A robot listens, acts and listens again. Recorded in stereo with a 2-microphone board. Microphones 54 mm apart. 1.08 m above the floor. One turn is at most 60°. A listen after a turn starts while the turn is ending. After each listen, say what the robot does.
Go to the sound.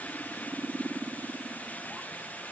Keep listening.
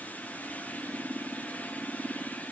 Keep listening.
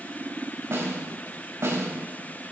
Turn 60° right.
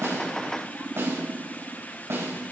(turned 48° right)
Turn 60° right.
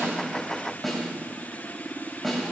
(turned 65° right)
Drive 1.0 m forward.
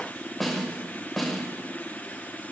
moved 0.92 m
Drive 1.0 m forward.
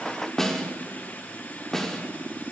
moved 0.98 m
Turn 10° left.
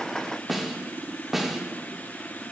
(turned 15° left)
Drive 1.0 m forward.
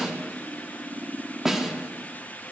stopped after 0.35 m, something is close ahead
Turn 10° right.
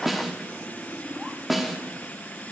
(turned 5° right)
I am next to the snare drum.